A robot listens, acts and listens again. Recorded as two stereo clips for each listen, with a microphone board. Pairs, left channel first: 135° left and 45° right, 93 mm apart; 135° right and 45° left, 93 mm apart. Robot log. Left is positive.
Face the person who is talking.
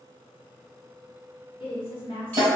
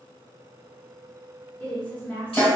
note: The woman speaking: 150° left.
cmd yaw +150
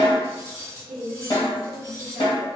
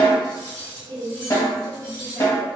note: The woman speaking is now 30° left.
cmd yaw +30
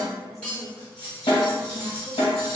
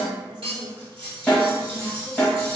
end: Facing the woman speaking, under 1 m away.